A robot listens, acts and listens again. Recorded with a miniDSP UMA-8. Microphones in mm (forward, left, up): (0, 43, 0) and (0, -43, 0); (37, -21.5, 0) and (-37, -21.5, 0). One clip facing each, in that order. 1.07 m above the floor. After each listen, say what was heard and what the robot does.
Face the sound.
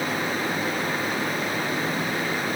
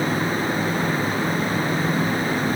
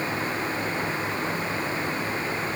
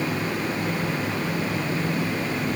Keep listening.
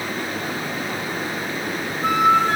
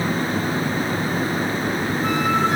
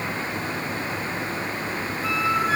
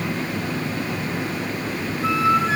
The flute: 120° left. Turn 120° left.
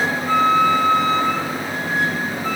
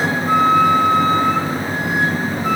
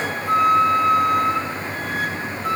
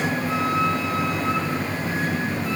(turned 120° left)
The flute is now 20° right. Turn 20° right.
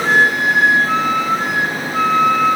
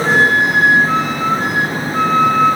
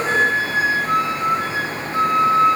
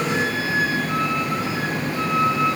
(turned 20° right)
Facing the flute.